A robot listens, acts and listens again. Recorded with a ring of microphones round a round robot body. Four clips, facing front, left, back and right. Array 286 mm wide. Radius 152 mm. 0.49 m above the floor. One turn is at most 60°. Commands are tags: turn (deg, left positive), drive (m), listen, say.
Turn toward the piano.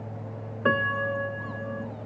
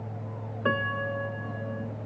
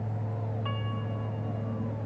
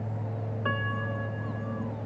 <turn deg="25"/>
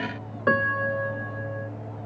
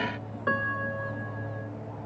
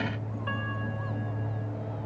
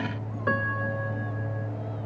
<say>Found it: a piano, straight ahead.</say>